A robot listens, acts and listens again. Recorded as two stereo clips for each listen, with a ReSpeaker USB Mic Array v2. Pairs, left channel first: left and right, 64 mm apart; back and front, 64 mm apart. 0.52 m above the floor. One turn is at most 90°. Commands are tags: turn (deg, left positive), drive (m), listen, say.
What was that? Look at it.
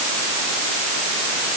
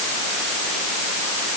<listen/>
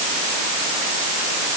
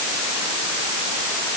<listen/>
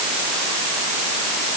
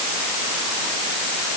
<say>I can't make out anything to turn to.</say>